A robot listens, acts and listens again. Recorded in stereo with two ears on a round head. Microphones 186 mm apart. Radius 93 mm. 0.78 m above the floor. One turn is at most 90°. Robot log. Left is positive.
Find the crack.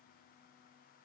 cmd idle
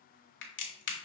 note: The crack: about 60° left or 120° left.
cmd yaw +60
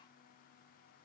cmd idle
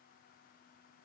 end: I heard a crack, but can't make it out now. It was about straight ahead or 60° left.